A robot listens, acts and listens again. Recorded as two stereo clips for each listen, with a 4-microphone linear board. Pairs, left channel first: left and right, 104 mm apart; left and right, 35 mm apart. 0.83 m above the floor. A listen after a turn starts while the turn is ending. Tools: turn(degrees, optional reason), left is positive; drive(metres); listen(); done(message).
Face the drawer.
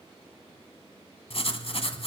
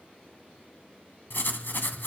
listen()
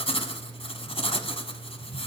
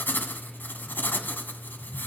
listen()
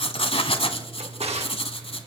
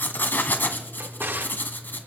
turn(degrees=-90)
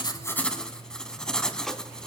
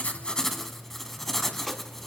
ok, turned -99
turn(degrees=10, reason="Nothing new. It was at 10° left.")
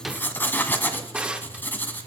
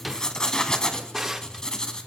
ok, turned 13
turn(degrees=-10, reason="The drawer is now 10° right.")
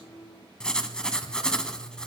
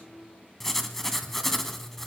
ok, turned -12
listen()
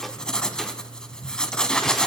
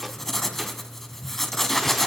listen()
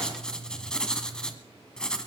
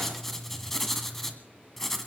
done("I heard a drawer from this way, but can't make it out now.")